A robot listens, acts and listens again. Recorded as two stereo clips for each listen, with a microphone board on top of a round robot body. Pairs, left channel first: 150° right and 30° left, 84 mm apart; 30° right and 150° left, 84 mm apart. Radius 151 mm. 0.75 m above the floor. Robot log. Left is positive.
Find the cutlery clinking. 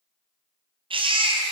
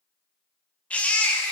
cmd idle
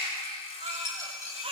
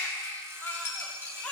note: The cutlery clinking: 90° right.
cmd yaw -90
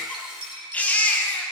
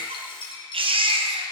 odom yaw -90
end: Found it: cutlery clinking, straight ahead, over 4 m away.